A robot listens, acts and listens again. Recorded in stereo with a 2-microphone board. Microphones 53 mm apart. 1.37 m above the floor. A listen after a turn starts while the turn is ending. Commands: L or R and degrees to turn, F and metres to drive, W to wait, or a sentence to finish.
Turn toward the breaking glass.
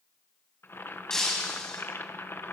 L30
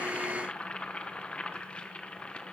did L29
W
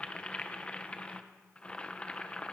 I heard breaking glass, but can't make it out now. It was about 20° right or 140° left.